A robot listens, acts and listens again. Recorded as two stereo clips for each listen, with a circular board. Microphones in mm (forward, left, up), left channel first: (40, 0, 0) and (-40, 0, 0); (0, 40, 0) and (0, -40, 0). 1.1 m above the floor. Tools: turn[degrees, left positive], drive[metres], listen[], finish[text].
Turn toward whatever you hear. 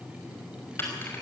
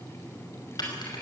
Thought: The keys jangling: 60° left.
Action: turn[60]
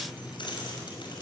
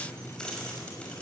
Thought: The keys jangling is now 15° left.
Action: turn[15]
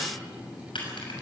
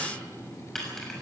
Action: finish[Facing the keys jangling, over 4 m away.]